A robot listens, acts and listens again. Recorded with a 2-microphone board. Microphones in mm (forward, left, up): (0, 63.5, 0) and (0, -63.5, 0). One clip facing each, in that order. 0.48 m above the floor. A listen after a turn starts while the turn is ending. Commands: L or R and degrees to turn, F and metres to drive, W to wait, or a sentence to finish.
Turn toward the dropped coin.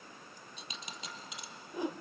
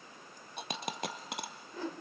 R60
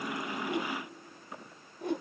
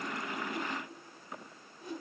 W
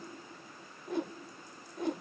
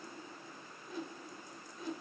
I heard a dropped coin, but can't make it out now. It was about straight ahead or 60° right.